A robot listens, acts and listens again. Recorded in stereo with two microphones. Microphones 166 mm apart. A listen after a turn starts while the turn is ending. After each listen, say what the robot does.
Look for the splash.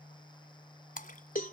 Turn 55° left.
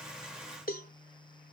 Keep listening.
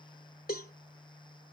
I heard a splash, but can't make it out now. It was about straight ahead or 70° left.